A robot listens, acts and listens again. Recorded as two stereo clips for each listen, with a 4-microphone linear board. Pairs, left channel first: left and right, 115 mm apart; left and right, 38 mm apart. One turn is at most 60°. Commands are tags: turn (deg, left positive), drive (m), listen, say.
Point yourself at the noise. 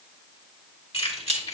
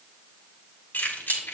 <turn deg="60"/>
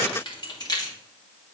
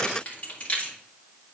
<turn deg="35"/>
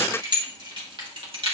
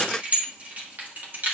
<turn deg="-55"/>
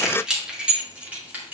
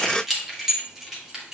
<turn deg="-15"/>
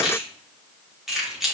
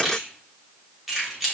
<say>Found it: keys jangling, straight ahead, 2 to 4 m away.</say>